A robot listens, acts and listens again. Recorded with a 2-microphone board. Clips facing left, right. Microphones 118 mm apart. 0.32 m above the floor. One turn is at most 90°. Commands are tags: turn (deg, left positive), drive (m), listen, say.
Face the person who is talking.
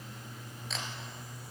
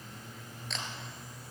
<listen/>
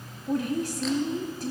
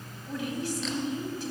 <turn deg="45"/>
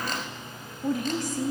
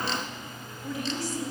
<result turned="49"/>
<turn deg="75"/>
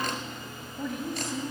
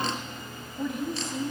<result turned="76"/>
<say>Facing the woman speaking, 1 to 2 m away.</say>